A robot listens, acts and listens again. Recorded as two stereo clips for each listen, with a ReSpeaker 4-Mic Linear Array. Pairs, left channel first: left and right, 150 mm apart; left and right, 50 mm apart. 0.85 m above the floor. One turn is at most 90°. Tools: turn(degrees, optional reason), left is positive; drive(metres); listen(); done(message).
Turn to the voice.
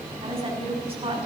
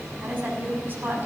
turn(degrees=-40, reason="The woman speaking: about 40° right or 140° right.")
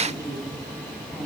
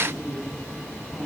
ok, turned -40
done("Facing the woman speaking, over 4 m away.")